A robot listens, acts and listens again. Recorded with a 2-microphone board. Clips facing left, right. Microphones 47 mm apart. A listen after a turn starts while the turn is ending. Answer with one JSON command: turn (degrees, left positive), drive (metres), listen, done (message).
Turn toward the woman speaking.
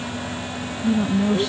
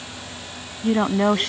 {"turn": -55}
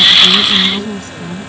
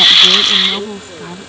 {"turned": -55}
{"turn": -20}
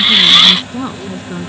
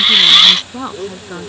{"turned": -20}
{"turn": -10}
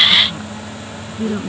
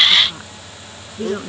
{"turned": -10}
{"turn": -10}
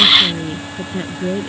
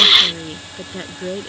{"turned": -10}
{"done": "Found it: a woman speaking, straight ahead."}